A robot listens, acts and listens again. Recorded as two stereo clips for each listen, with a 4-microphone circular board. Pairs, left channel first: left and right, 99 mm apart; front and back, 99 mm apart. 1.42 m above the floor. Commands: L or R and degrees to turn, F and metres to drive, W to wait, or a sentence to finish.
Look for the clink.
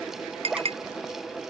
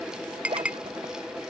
R100
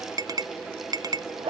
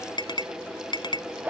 R40
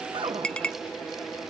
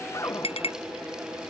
L10
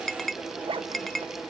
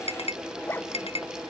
Facing the clink.